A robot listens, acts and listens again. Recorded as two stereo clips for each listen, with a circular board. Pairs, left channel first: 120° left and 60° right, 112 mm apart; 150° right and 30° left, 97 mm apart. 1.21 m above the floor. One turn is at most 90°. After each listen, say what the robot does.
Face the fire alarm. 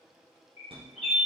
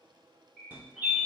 Turn 35° right.
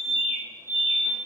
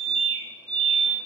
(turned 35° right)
Turn 10° left.
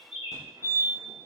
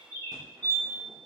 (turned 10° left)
Found it: a fire alarm, straight ahead.